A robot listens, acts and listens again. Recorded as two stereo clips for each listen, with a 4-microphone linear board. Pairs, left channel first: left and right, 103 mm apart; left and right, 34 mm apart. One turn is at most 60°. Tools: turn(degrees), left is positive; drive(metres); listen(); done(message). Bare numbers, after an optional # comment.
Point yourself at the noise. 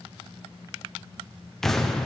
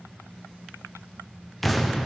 turn(30)
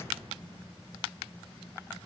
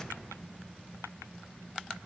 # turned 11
listen()
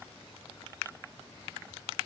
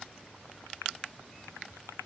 done("I heard an explosion, but can't make it out now. It was about 10° right or 165° left.")